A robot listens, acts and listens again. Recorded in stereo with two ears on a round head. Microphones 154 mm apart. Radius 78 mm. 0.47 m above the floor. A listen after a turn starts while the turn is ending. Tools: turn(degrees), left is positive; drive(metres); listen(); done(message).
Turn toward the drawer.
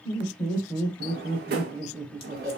turn(degrees=-65)
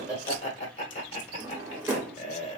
turn(degrees=-15)
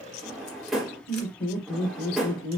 done("Facing the drawer.")